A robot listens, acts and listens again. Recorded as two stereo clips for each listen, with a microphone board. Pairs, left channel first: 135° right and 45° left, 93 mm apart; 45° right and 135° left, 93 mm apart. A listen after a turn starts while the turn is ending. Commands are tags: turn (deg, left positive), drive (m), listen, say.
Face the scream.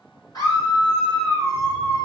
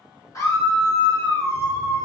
<turn deg="-90"/>
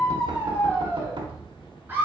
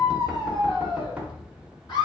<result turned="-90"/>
<turn deg="-20"/>
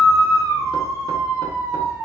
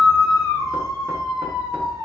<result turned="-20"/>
<say>Found it: a scream, straight ahead.</say>